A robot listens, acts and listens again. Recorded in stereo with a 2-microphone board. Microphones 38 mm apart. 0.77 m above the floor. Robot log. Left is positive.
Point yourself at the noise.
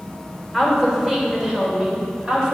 note: The woman speaking: about 25° right or 155° right.
cmd yaw -25
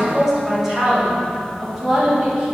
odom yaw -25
note: The woman speaking: about 15° right or 165° right.
cmd yaw -15
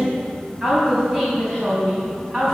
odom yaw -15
cmd yaw -30
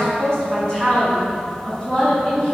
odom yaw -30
note: So it is at 15° left.
cmd yaw +15
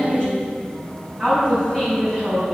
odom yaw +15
note: The woman speaking is now 10° left.
cmd yaw +10
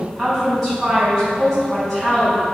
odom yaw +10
end: Facing the woman speaking.